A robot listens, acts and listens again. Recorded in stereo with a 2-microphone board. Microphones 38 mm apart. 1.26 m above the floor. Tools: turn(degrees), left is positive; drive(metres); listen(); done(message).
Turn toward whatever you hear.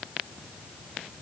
listen()
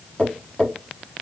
turn(degrees=25)
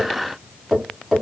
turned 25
done("Found it: tapping, straight ahead, 1 to 2 m away.")